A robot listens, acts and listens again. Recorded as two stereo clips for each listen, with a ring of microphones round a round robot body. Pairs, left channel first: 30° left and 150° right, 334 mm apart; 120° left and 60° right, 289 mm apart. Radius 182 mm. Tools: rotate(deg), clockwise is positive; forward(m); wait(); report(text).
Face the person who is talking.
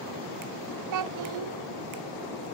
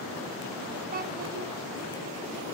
rotate(120)
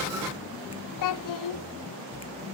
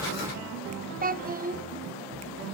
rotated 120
report("Facing the child speaking.")